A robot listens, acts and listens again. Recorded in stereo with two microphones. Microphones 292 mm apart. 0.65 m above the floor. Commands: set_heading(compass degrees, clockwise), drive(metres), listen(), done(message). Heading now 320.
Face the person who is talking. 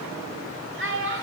set_heading(0)
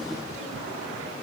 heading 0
listen()
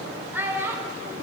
done("Facing the child speaking, 1 to 2 m away.")